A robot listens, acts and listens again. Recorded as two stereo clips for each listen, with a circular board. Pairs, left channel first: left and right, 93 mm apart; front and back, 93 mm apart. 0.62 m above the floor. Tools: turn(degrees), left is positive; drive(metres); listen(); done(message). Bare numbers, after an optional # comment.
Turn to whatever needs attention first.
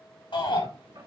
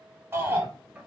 # The shout: 115° left.
turn(115)
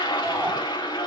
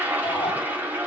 listen()
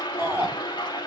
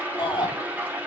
# The shout is now 25° right.
turn(-25)
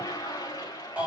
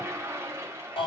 # The shout is now 15° right.
turn(-15)
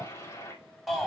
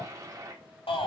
done("Found it: a shout, straight ahead, over 4 m away.")